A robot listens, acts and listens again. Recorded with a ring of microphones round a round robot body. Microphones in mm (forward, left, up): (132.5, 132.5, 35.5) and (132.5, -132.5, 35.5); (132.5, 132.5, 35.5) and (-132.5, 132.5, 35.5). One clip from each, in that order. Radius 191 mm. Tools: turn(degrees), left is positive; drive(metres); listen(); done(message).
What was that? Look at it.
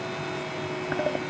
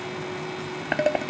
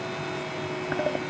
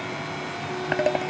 turn(degrees=-135)
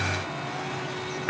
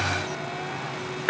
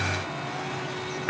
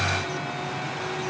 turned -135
turn(degrees=-30)
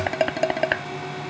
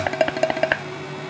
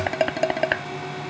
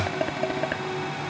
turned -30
turn(degrees=-10)
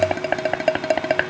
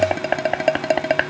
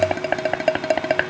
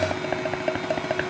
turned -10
done("Facing the dishes clattering.")